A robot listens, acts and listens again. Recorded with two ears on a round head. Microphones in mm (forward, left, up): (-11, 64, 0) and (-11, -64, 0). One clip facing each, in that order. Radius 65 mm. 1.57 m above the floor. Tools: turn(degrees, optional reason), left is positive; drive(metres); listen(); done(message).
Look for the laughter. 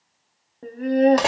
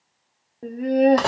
turn(degrees=-30)
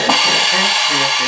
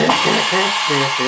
listen()
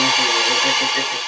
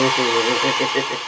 listen()
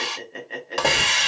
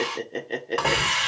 turn(degrees=-145, reason="So it is at 145° right.")
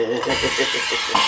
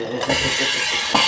turn(degrees=40, reason="The laughter is now 40° left.")
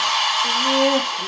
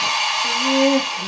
done("Facing the laughter, 1 to 2 m away.")